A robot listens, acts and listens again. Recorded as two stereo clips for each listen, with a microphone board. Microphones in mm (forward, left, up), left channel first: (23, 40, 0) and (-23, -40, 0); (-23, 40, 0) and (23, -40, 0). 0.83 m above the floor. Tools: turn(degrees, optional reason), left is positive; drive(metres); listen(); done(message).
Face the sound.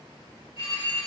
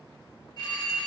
turn(degrees=80, reason="The phone ringing: 80° left.")
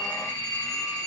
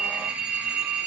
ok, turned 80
turn(degrees=15, reason="The phone ringing is now 15° left.")
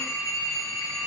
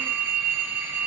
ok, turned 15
done("Found it: a phone ringing, straight ahead.")